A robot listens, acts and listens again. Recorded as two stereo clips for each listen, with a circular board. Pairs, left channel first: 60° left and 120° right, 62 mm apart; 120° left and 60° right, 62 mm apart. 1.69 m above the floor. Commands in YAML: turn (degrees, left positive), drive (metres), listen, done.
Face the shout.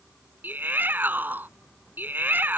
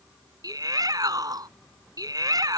turn: -60
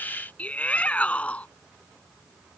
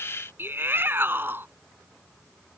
done: "Facing the shout."